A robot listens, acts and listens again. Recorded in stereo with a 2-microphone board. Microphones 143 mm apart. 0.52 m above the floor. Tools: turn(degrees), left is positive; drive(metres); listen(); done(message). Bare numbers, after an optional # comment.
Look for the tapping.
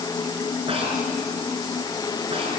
listen()
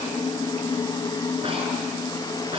listen()
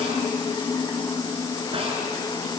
done("I can't make out tapping.")